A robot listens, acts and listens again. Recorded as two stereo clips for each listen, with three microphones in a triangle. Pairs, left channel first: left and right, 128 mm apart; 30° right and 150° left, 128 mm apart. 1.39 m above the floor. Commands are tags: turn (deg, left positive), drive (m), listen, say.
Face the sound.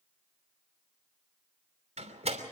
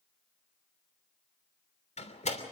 <turn deg="-60"/>
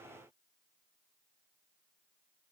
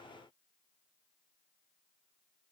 <say>Facing where the door slam came from. I can't hear it now.</say>